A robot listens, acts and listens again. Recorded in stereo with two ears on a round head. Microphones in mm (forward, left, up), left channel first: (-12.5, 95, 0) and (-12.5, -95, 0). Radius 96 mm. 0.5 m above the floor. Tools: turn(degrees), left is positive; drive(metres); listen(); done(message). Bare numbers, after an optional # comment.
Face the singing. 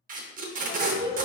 # The singing: about 15° left or 165° left.
turn(15)
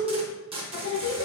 # So it is at 120° left.
turn(120)
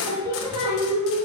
# The singing is now 30° right.
turn(-30)
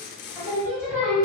# The singing is now 15° right.
turn(-15)
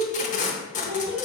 done("Facing the singing.")